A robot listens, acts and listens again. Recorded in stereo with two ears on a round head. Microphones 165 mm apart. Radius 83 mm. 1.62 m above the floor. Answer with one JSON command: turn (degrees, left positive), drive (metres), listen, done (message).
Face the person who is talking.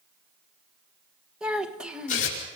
{"turn": -30}
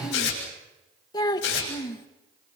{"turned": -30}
{"turn": 20}
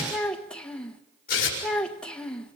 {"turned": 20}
{"done": "Found it: a child speaking, straight ahead."}